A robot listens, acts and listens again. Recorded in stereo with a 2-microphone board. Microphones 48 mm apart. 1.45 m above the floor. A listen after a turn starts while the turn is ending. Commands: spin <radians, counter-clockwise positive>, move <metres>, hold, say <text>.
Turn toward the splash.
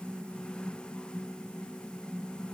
hold
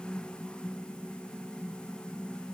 hold
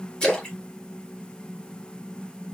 spin 0.26
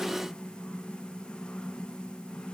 hold
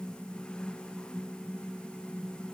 say I heard a splash, but can't make it out now. It was about straight ahead or 150° left.